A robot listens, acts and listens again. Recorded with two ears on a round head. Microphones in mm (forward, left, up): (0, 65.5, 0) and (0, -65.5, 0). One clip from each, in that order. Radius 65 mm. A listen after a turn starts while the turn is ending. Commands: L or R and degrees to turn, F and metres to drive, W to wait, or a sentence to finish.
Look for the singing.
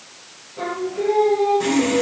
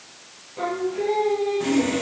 R25
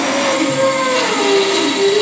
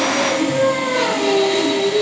R30
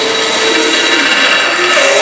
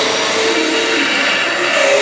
W
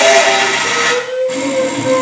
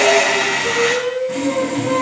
R10
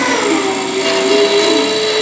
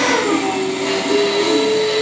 Found it: singing, straight ahead, 2 to 4 m away.